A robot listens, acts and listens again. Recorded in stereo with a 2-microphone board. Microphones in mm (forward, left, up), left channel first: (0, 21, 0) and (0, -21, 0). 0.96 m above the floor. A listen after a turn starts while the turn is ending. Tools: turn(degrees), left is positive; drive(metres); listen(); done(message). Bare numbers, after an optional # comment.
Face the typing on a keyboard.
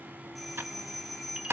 # The typing on a keyboard: about 70° right or 110° right.
turn(-70)
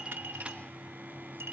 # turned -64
listen()
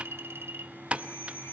# So it is at 30° right.
turn(-30)
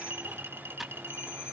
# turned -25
listen()
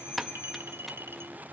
done("Found it: typing on a keyboard, straight ahead, 1 to 2 m away.")